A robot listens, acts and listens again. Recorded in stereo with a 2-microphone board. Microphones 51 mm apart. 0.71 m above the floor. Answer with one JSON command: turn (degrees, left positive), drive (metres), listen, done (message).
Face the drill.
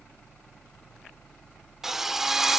{"turn": -30}
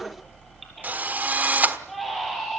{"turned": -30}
{"turn": -145}
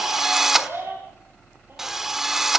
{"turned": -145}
{"turn": -10}
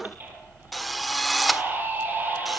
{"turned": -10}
{"done": "Found it: a drill, straight ahead, 1 to 2 m away."}